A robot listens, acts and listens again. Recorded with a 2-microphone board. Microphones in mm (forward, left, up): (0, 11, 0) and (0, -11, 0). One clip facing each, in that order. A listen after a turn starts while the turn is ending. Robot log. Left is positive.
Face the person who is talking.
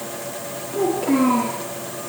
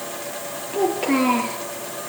note: The child speaking: about 35° right or 145° right.
cmd yaw -35
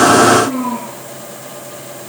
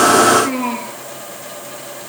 note: So it is at 105° right.
cmd yaw -105
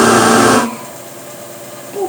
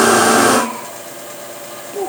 end: Found it: a child speaking, straight ahead.